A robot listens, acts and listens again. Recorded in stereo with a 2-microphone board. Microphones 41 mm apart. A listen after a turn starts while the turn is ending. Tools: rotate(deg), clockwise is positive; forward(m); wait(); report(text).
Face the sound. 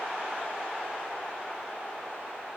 wait()
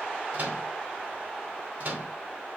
rotate(55)
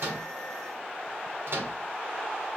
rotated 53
rotate(65)
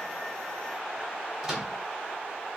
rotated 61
report("Facing the microwave.")